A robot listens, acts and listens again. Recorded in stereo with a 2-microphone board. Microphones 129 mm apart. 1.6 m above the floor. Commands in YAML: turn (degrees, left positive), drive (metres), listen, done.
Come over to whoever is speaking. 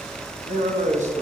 turn: -65
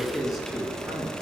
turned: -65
listen: true
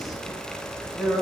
drive: 1.0
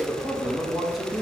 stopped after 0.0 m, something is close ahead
done: "Blocked. The man speaking is further on, straight ahead."